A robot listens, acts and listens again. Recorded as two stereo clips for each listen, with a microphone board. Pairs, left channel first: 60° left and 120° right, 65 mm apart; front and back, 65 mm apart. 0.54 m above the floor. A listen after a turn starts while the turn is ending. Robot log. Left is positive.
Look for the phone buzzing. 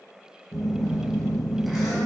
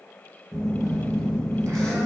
note: The phone buzzing: 150° left.
cmd yaw +150
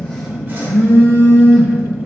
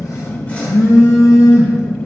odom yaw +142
note: The phone buzzing is now 10° left.
cmd yaw +10
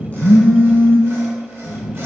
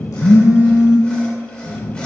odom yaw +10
end: Found it: a phone buzzing, straight ahead.